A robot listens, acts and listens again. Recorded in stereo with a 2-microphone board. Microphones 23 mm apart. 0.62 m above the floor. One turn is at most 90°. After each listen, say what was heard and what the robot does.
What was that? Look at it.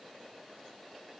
Keep listening.
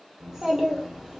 The child speaking: about 30° right or 150° right. Turn 30° right.
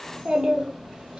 So it is at 120° right. Turn 90° right.
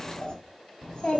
The child speaking is now 50° left. Turn 50° left.
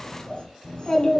The child speaking is now 30° left. Turn 30° left.
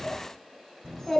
Facing the child speaking.